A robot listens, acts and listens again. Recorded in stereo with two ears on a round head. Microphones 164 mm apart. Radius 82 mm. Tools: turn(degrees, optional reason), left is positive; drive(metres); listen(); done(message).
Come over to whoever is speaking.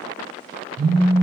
listen()
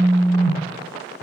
listen()
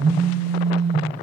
done("I can't make out anyone speaking, only a phone buzzing.")